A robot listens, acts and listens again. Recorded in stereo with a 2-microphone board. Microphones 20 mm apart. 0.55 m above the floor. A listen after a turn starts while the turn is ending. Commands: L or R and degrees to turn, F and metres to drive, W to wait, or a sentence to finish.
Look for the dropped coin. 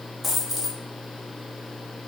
L30
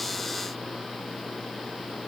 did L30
W
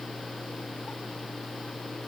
I heard a dropped coin, but can't make it out now. It was about 30° right or 150° left.